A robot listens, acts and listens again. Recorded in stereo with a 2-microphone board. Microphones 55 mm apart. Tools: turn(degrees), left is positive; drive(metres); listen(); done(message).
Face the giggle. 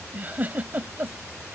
turn(degrees=-35)
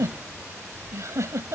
turn(degrees=-110)
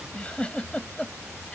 turn(degrees=25)
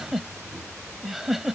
done("Found it: a giggle, straight ahead.")